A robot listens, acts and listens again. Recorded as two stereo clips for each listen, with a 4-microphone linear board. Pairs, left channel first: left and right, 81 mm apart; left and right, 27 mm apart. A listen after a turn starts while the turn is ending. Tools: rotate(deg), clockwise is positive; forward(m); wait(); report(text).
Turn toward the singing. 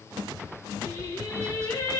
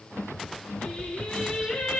rotate(-40)
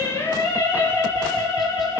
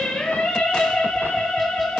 rotate(-95)
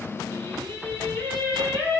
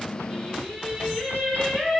rotate(-15)
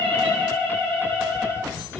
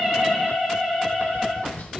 report("Facing the singing, over 4 m away.")